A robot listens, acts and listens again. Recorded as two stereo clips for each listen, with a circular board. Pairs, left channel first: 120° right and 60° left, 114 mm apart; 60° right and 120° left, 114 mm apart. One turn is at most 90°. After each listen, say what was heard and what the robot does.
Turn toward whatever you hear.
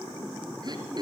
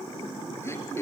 The throat clearing: 10° left. Turn 10° left.
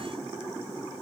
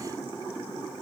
Keep listening.
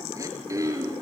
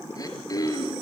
Facing the throat clearing, over 4 m away.